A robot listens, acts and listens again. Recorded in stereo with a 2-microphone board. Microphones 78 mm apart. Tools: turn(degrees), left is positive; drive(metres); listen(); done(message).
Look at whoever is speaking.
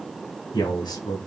turn(degrees=70)
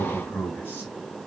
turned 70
turn(degrees=25)
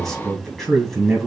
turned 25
done("Facing the man speaking, 2 to 4 m away.")